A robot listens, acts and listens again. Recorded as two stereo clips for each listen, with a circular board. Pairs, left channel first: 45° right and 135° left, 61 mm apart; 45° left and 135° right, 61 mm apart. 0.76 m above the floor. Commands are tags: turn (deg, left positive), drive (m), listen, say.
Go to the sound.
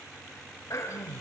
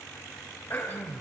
<drive m="1.0"/>
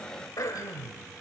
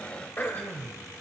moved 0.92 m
<turn deg="-15"/>
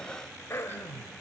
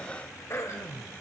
<drive m="1.0"/>
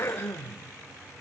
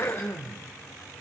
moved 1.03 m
<drive m="1.0"/>
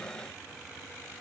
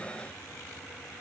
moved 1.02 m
<listen/>
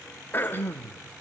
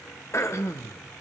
<turn deg="10"/>
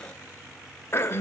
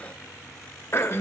<drive m="1.0"/>
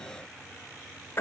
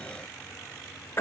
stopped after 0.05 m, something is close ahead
<say>I am next to the throat clearing.</say>